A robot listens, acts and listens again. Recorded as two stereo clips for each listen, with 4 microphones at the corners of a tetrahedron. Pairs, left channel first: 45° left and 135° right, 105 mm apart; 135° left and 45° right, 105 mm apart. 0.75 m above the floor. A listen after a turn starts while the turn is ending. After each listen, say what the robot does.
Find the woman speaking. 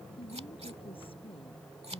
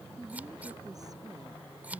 Turn 10° left.
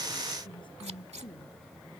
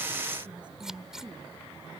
Found it: a woman speaking, straight ahead.